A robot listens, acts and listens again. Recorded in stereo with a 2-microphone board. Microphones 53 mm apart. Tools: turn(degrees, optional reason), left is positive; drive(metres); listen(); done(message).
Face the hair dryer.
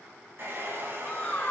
turn(degrees=-50, reason="The hair dryer: about 50° right or 130° right.")
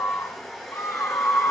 done("Found it: a hair dryer, straight ahead, 2 to 4 m away.")